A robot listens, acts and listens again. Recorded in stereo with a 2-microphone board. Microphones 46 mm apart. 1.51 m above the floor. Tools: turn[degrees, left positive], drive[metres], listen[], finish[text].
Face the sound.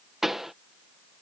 Action: turn[-30]
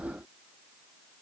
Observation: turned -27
Action: listen[]
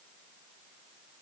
Action: finish[I heard a pop, but can't make it out now. It was about 20° left or 145° right.]